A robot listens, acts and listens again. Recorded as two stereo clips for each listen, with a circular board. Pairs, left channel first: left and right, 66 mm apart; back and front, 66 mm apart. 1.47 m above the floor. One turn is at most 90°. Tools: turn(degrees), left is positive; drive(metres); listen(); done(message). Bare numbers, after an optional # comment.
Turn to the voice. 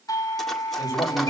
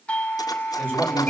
# The man speaking: 60° left.
turn(60)
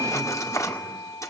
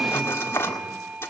listen()
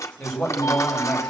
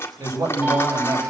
# The man speaking is now 15° left.
turn(15)
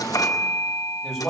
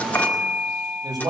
done("Found it: a man speaking, straight ahead, over 4 m away.")